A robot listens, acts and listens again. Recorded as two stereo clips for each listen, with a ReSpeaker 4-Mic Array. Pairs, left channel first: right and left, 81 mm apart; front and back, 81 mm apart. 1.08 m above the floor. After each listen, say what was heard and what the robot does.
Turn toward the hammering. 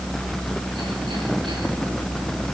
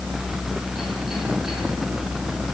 Keep listening.
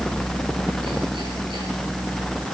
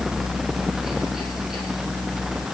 Keep listening.
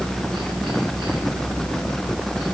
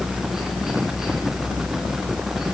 I can't make out hammering.